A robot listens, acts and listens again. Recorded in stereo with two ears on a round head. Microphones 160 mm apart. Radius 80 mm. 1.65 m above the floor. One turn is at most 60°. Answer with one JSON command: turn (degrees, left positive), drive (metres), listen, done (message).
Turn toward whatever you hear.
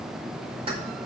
{"turn": -35}
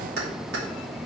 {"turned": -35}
{"turn": -60}
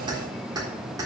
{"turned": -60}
{"turn": -20}
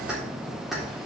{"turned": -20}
{"done": "Found it: keys jangling, straight ahead."}